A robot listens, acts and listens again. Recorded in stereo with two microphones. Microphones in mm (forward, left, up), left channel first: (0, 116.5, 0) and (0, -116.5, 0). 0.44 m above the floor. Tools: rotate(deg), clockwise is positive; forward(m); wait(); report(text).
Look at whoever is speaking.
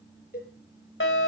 wait()
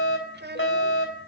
rotate(45)
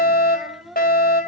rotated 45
report("Facing the child speaking.")